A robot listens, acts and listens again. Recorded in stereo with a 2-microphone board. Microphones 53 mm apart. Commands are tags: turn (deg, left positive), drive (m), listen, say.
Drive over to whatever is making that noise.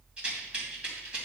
<turn deg="-20"/>
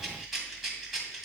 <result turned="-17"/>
<drive m="1.0"/>
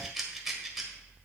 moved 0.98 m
<turn deg="-10"/>
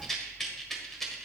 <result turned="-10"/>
<drive m="1.0"/>
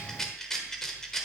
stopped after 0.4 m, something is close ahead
<turn deg="10"/>
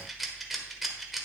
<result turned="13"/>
<say>I am next to the rattle.</say>